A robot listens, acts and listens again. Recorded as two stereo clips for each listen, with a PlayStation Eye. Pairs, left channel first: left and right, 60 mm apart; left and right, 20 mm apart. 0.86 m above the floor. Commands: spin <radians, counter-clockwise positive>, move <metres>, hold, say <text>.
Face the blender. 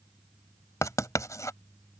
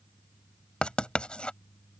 hold
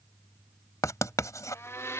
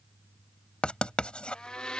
spin 0.87
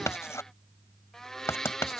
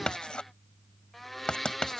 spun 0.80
spin 0.17
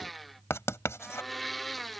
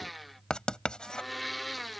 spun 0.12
say Found it: a blender, straight ahead.